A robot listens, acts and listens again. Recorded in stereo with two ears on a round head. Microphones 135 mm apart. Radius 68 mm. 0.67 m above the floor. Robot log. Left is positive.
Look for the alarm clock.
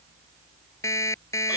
note: The alarm clock: about 20° left or 160° left.
cmd yaw +20
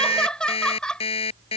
note: So it is at 140° left.
cmd yaw +140
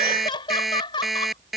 end: Facing the alarm clock.